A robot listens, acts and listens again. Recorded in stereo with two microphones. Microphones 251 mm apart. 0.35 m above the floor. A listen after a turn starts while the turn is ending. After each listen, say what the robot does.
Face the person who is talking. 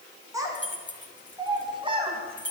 Turn 20° right.
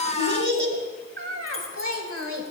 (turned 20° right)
Turn 120° right.
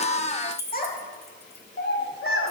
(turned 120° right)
Turn 55° left.
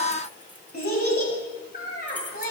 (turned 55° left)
Turn 40° left.
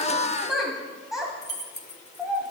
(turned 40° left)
Facing the child speaking, 1 to 2 m away.